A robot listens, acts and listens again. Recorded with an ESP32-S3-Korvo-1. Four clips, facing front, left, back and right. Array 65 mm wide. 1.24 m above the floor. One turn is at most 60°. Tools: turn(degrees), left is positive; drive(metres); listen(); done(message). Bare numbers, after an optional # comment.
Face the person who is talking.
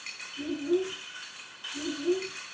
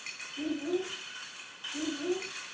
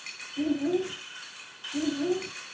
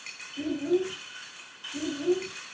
# The child speaking: 175° right.
turn(-60)
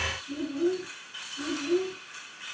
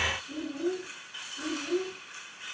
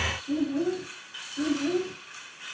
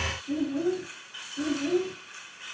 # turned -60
# The child speaking is now 145° right.
turn(-60)
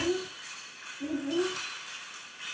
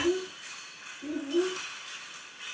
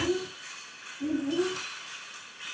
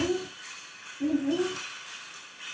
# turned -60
# The child speaking is now 85° right.
turn(-60)
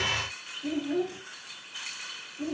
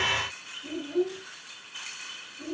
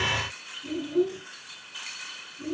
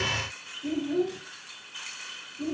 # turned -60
# The child speaking is now 15° right.
turn(-15)
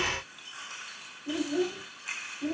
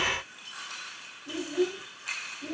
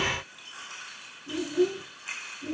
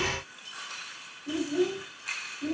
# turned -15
done("Found it: a child speaking, straight ahead.")